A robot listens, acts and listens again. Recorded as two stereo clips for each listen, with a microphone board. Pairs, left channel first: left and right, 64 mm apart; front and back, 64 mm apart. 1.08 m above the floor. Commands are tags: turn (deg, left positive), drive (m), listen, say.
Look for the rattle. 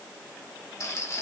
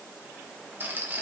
<turn deg="125"/>
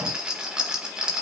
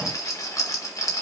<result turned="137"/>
<turn deg="-15"/>
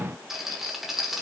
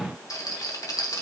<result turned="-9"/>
<say>Facing the rattle, 1 to 2 m away.</say>